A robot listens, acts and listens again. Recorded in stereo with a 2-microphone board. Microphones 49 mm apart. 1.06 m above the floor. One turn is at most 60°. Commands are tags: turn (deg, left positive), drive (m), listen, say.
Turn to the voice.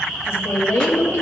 <turn deg="60"/>
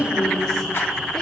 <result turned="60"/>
<say>Facing the woman speaking.</say>